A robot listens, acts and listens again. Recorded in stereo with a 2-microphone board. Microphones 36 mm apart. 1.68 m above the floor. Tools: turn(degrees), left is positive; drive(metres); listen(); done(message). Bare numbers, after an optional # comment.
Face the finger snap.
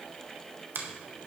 # The finger snap: about 70° right or 110° right.
turn(-70)
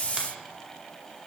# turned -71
listen()
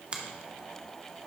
# So it is at 30° right.
turn(-30)
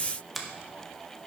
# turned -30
done("Found it: a finger snap, straight ahead, 1 to 2 m away.")